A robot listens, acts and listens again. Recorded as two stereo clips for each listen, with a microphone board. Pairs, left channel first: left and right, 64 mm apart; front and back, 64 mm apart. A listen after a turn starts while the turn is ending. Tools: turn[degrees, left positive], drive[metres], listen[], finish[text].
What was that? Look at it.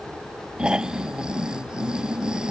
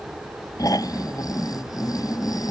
Thought: The snoring: 10° right.
Action: turn[-10]
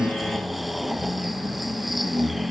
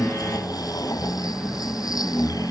Action: finish[Facing the snoring.]